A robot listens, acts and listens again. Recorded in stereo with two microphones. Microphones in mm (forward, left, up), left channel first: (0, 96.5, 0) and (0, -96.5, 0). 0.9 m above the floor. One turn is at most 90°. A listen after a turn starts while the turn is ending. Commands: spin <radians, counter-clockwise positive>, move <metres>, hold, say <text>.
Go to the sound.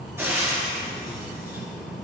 spin -0.52
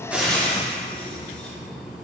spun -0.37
move 1.0
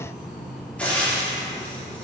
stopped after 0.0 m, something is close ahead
spin 0.17
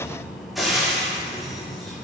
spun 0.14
say Blocked. The frying is further on, straight ahead.